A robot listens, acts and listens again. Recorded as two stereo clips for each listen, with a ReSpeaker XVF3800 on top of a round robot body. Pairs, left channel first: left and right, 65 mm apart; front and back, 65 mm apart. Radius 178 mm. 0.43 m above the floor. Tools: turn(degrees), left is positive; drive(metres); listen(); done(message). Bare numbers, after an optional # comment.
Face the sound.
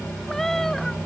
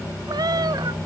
# The cat meowing: 175° left.
turn(175)
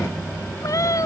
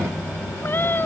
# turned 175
# The cat meowing is now 60° left.
turn(60)
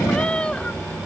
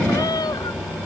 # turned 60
# The cat meowing is now 15° left.
turn(15)
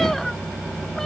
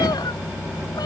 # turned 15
done("Found it: a cat meowing, straight ahead.")